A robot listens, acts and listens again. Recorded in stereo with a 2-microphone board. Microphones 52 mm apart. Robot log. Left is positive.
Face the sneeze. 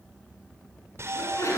note: The sneeze: about 70° left or 110° left.
cmd yaw +70
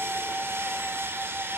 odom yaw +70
cmd idle
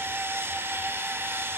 end: I heard a sneeze, but can't make it out now. It was about straight ahead or 40° left.